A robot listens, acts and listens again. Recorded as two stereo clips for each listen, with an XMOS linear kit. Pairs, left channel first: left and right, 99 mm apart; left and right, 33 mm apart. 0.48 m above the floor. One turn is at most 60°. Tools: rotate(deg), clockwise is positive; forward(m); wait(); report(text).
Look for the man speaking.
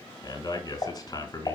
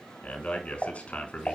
rotate(-45)
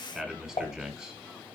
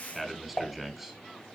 report("Found it: a man speaking, straight ahead.")